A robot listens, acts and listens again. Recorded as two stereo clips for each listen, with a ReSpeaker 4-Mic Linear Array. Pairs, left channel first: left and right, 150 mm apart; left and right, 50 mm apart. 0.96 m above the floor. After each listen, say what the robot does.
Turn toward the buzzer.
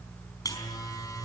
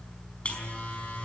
Turn 25° left.
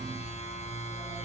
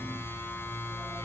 Turn 130° left.
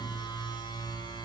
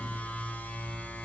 Turn 30° left.
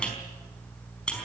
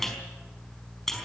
Turn 10° left.
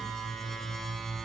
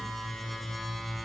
Facing the buzzer, over 4 m away.